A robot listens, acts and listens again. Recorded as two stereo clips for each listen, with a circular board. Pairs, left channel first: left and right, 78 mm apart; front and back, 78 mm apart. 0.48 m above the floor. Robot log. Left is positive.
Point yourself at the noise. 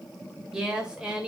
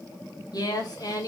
note: The woman speaking: 15° right.
cmd yaw -15
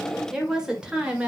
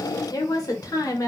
note: The woman speaking is now 20° right.
cmd yaw -20
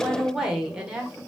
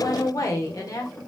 note: The woman speaking is now 20° right.
cmd yaw -20
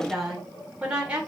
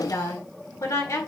note: The woman speaking is now 20° right.
cmd yaw -20
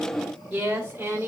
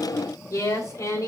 note: The woman speaking is now 30° right.
cmd yaw -30
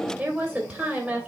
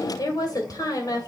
note: The woman speaking is now 10° right.
cmd yaw -10
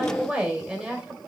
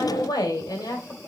end: Found it: a woman speaking, straight ahead, 2 to 4 m away.